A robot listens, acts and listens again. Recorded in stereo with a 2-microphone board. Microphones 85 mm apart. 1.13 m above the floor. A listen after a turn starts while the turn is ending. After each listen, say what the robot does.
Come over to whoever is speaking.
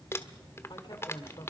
Turn 60° left.
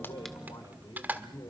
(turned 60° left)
Turn 60° left.
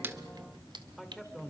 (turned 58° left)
Drive 1.0 m forward.
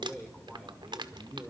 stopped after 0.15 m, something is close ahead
Blocked. The man speaking is further on, straight ahead.